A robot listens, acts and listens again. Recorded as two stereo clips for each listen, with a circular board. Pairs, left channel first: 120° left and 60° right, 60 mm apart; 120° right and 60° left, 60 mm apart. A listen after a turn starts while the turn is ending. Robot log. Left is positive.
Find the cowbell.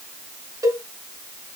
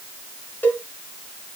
note: The cowbell: 65° right.
cmd yaw -65
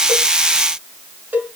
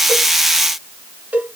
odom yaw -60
end: Facing the cowbell.